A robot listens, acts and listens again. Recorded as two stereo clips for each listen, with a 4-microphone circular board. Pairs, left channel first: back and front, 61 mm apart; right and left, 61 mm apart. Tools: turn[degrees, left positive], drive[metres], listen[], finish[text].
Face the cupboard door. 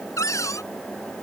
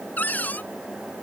Thought: The cupboard door: 150° right.
Action: turn[-150]
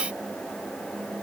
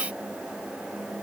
Action: listen[]
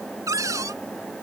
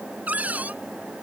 Thought: The cupboard door is now 25° left.
Action: turn[25]
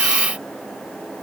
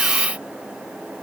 Action: listen[]
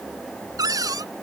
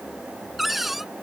Action: finish[Facing the cupboard door.]